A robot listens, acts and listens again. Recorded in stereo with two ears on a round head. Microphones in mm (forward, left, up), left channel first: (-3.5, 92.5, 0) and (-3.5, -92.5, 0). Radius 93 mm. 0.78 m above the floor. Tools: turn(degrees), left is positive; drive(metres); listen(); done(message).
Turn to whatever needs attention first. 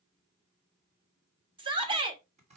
turn(degrees=-25)
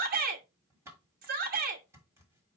turn(degrees=-125)
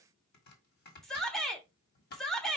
done("Found it: a shout, straight ahead.")